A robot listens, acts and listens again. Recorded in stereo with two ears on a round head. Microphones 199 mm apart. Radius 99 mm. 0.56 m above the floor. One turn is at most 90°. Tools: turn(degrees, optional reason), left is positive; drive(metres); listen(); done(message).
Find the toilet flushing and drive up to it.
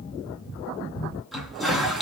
turn(degrees=30)
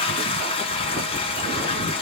turn(degrees=90, reason="So it is at 150° left.")
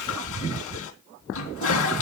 turn(degrees=70, reason="The toilet flushing is now 70° left.")
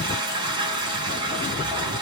turn(degrees=-20, reason="The toilet flushing is now 20° right.")
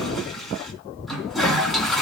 drive(metres=1.0)
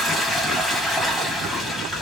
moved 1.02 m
drive(metres=1.0)
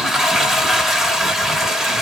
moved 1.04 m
drive(metres=1.0)
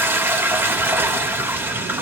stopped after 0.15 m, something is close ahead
turn(degrees=-10, reason="The toilet flushing is now 10° right.")
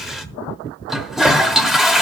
done("I am next to the toilet flushing.")